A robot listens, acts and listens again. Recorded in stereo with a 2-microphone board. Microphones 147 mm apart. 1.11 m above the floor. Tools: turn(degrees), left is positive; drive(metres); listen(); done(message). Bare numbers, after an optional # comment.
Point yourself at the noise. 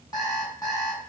# The alarm clock: about 30° left or 150° left.
turn(30)
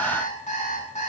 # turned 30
# So it is at 120° left.
turn(120)
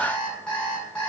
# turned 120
done("Facing the alarm clock, over 4 m away.")